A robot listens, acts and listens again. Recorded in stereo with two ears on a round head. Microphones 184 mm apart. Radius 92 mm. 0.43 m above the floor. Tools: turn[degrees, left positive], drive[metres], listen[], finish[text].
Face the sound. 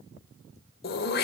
Thought: The throat clearing: about 50° left or 130° left.
Action: turn[50]
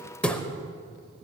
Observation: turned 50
Action: finish[Facing the throat clearing.]